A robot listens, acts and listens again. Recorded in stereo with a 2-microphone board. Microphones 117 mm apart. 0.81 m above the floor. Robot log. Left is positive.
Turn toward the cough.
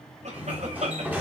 cmd yaw -90
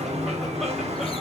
cmd idle
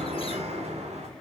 cmd idle
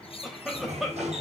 end: Found it: a cough, straight ahead.